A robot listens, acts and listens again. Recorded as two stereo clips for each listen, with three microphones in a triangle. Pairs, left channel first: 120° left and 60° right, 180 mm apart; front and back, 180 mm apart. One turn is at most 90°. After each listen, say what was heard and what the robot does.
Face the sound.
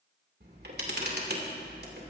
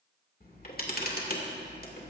The camera shutter: 35° right. Turn 35° right.
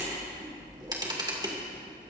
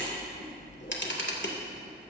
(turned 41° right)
The camera shutter is now 10° left. Turn 10° left.
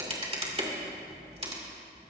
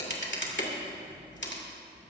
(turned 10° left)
Found it: a camera shutter, straight ahead.